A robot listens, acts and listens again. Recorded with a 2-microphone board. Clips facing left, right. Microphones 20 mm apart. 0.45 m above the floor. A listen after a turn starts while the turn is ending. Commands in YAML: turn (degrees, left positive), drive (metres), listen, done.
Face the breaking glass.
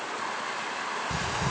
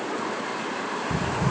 listen: true
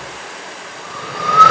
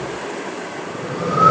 listen: true
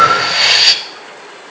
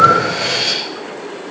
done: "I can't make out breaking glass, only breathing."